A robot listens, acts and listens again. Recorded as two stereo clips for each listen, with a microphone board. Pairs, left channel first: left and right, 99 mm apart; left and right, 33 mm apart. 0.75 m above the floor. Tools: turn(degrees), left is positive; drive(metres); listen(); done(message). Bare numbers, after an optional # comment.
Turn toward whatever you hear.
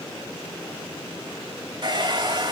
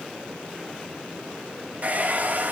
# The hair dryer: about 50° right or 130° right.
turn(-50)
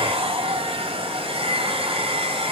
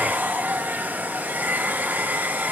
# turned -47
# So it is at 85° right.
turn(-85)
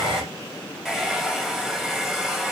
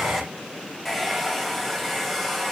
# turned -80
done("Found it: a hair dryer, straight ahead.")